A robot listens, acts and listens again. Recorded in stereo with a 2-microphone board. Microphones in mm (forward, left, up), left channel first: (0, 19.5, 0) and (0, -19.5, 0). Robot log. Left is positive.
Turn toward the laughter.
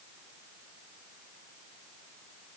cmd idle
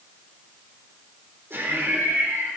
note: The laughter: about 75° right or 105° right.
cmd yaw -75
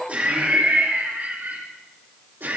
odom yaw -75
note: So it is at 55° right.
cmd yaw -55
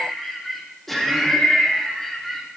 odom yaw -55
end: Facing the laughter.